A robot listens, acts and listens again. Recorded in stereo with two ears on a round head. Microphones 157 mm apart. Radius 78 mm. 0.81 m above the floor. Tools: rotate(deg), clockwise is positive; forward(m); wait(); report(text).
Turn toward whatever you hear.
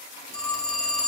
rotate(-45)
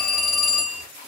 report("Facing the phone ringing, under 1 m away.")